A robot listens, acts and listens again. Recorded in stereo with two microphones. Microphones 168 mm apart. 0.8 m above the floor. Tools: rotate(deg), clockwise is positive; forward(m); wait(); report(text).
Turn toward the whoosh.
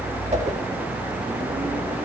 rotate(45)
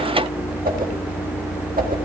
rotate(80)
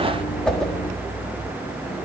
report("Found it: a whoosh, straight ahead, 1 to 2 m away.")